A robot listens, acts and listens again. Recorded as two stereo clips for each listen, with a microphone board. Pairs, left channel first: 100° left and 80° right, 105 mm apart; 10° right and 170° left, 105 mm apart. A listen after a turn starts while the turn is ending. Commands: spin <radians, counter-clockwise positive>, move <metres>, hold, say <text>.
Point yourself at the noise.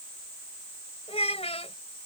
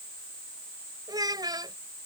spin 2.09
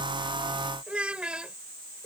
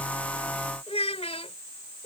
say Found it: a child speaking, straight ahead.